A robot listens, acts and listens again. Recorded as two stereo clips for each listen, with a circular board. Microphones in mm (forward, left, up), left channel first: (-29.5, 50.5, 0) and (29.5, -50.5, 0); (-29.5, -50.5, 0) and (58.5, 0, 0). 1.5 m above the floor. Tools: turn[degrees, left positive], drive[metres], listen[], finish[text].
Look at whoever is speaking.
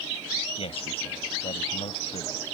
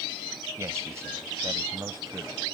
Thought: The man speaking: 90° left.
Action: turn[90]
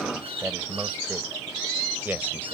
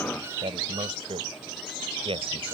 Thought: The man speaking is now 15° left.
Action: turn[15]
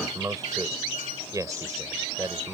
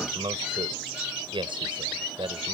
Action: finish[Found it: a man speaking, straight ahead.]